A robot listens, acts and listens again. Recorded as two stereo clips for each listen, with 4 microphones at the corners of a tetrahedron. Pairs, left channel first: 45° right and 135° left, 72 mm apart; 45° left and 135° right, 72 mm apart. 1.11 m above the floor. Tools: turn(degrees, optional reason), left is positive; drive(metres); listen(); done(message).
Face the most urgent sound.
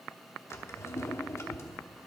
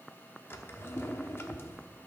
listen()
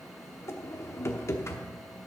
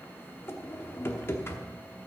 listen()
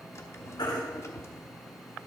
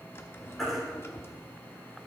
turn(degrees=-45, reason="The baby crying: 45° right.")
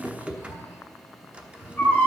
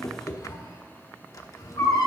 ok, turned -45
turn(degrees=25, reason="The baby crying is now 25° left.")
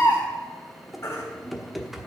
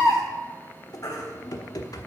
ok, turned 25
done("Found it: a baby crying, straight ahead, 2 to 4 m away.")